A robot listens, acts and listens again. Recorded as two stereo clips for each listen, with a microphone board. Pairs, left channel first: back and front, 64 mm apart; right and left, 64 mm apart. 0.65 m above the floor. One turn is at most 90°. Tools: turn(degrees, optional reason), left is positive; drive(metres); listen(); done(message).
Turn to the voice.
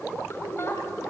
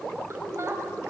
turn(degrees=90, reason="The woman speaking: 135° left.")
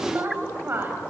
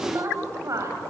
turn(degrees=55, reason="The woman speaking is now 55° left.")
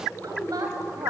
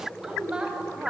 turn(degrees=15, reason="The woman speaking is now 15° left.")
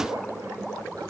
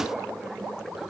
listen()
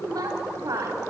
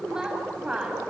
turn(degrees=10, reason="The woman speaking is now 10° left.")
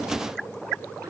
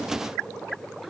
listen()
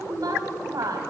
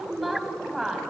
done("Found it: a woman speaking, straight ahead, over 4 m away.")